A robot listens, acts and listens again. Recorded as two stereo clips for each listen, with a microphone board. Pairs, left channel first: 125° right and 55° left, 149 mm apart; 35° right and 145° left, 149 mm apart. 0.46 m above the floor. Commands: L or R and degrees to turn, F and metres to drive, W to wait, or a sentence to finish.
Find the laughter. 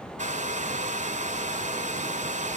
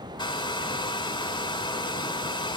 W
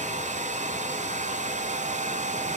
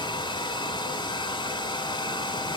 W
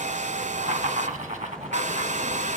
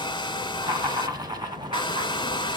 L85
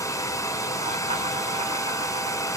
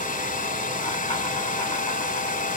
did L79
W
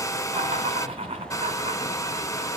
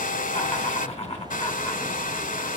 L10
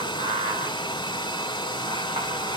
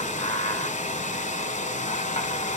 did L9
Found it: laughter, straight ahead.